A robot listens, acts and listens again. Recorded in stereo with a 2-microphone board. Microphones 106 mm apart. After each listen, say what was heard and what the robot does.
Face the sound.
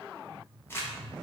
The crumpling: about 25° left or 155° left. Turn 25° left.
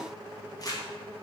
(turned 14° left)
So it is at 140° left. Turn 140° left.
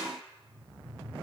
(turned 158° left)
Nothing new. It was at 15° right. Turn 15° right.
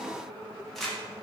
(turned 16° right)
Facing the crumpling, under 1 m away.